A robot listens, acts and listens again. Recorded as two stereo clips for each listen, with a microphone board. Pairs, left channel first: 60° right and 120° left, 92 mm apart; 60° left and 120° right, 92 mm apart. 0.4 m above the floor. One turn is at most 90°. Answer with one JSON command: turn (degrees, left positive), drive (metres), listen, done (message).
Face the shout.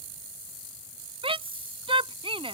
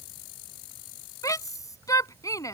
{"turn": 90}
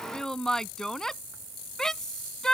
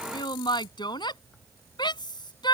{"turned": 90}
{"turn": 25}
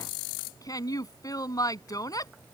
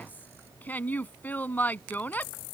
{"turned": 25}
{"turn": -10}
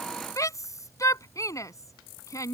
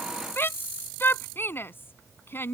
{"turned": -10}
{"done": "Found it: a shout, straight ahead."}